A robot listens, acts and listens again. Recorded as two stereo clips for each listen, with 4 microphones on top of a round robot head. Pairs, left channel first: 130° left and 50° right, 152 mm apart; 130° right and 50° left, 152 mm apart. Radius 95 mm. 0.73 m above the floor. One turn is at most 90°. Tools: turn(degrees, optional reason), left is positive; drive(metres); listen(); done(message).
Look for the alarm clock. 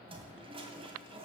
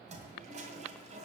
listen()
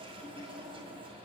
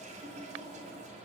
listen()
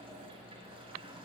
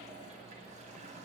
done("I can't make out an alarm clock, only a toilet flushing.")